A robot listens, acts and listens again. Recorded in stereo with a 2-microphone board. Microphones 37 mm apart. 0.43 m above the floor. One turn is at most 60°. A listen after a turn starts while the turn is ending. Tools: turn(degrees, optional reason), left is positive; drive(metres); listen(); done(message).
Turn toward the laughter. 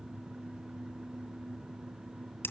listen()
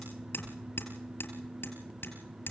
listen()
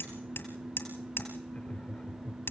turn(degrees=40, reason="The laughter: about 40° left or 140° left.")
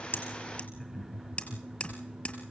turn(degrees=10, reason="So it is at 10° left.")
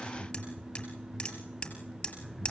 turn(degrees=10, reason="The laughter is now 10° left.")
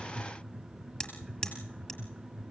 done("Facing the laughter.")